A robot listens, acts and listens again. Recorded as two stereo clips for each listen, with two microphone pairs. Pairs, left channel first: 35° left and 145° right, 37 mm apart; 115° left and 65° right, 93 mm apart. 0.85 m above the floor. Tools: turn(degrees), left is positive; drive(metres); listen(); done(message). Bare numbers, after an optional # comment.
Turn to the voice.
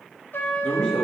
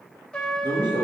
# The man speaking: 45° right.
turn(-45)
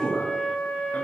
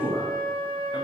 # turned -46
done("Found it: a man speaking, straight ahead, 1 to 2 m away.")